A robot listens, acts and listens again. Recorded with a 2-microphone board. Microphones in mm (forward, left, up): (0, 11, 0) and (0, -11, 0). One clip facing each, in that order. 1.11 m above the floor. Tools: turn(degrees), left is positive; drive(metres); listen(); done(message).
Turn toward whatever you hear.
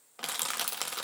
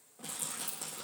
turn(degrees=90)
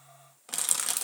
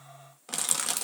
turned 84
done("Facing the crushing.")